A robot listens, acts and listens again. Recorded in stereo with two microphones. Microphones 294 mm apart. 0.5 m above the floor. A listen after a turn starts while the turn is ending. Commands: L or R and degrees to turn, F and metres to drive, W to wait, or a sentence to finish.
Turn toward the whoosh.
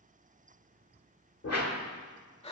L60
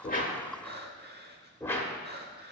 L10
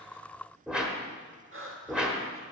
Found it: a whoosh, straight ahead.